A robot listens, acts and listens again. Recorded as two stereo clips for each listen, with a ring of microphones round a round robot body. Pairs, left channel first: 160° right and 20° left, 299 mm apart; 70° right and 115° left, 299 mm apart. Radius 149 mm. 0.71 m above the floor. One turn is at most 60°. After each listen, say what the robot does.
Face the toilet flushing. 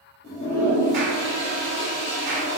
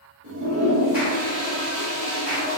Turn 60° left.
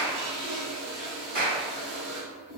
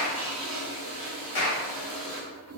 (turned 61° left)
Turn 60° left.
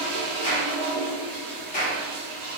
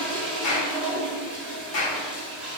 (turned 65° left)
Turn 25° left.
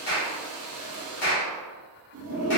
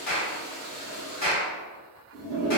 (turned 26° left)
Facing the toilet flushing, 1 to 2 m away.